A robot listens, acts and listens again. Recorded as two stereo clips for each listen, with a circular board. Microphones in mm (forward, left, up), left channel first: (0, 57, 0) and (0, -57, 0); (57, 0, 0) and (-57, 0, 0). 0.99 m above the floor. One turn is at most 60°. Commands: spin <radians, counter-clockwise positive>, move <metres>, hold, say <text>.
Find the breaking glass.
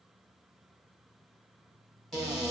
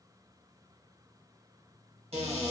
hold
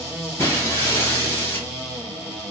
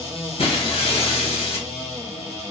spin 0.44
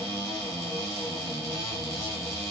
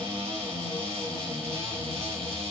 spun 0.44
say Facing where the breaking glass came from. I can't hear it now.